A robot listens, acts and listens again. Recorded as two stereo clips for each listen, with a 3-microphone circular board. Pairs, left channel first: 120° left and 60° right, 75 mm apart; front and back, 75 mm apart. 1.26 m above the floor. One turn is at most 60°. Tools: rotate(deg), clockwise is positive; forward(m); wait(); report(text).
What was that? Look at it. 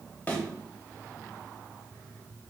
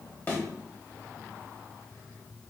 rotate(-55)
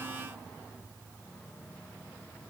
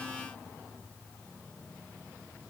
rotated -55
report("I heard a thud from this way, but can't make it out now.")